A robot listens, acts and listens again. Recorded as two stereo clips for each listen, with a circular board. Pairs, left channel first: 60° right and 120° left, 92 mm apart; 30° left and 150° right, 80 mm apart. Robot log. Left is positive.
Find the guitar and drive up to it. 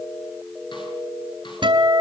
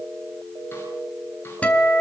note: The guitar: 100° left.
cmd yaw +100
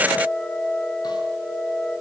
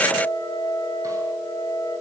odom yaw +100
note: The guitar is now 30° left.
cmd yaw +30
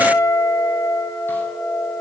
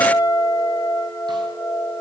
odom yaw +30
cmd fwd 1.0
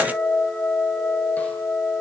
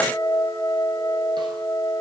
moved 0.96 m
cmd fwd 1.0
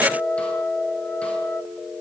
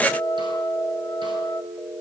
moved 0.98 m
note: The guitar is now 15° left.
cmd yaw +15
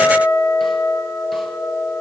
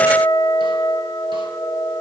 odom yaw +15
cmd fwd 1.0
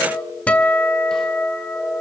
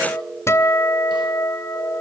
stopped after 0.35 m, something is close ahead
end: I am next to the guitar.